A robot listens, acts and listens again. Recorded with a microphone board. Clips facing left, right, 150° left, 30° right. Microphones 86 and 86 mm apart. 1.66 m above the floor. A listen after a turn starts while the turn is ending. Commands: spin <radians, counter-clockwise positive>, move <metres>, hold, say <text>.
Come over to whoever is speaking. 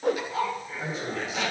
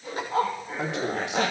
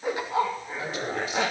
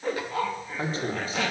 spin -1.48
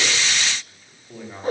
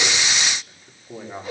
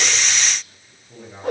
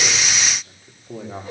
spin -0.35
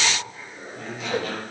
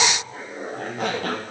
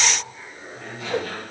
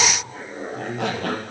move 1.0
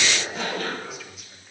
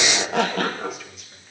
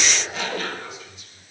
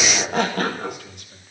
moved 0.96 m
move 1.0
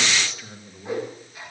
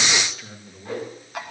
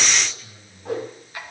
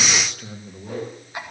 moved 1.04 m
move 1.0
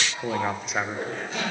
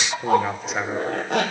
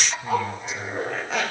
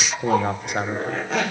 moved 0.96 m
move 1.0
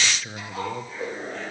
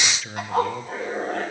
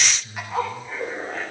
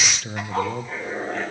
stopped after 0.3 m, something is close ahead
say I am next to the man speaking.